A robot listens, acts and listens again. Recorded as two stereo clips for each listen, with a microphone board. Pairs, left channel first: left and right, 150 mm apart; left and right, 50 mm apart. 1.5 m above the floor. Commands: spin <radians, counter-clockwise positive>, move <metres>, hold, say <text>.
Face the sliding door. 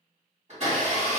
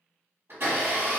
hold
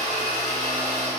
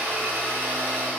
hold
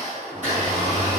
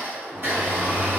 spin -0.35
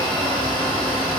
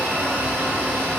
hold
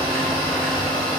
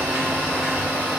hold
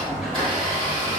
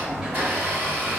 say Found it: a sliding door, straight ahead.